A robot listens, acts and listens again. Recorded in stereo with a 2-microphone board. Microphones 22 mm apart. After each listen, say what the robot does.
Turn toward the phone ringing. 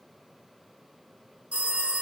Turn 90° right.
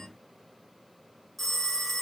Found it: a phone ringing, straight ahead, 1 to 2 m away.